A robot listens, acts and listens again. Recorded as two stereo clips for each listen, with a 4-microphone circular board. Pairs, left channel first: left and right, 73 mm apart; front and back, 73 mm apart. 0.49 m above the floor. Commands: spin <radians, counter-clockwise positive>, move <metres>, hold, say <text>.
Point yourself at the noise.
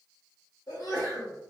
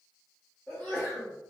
spin 1.13
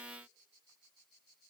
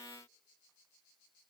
say Facing where the sneeze came from. I can't hear it now.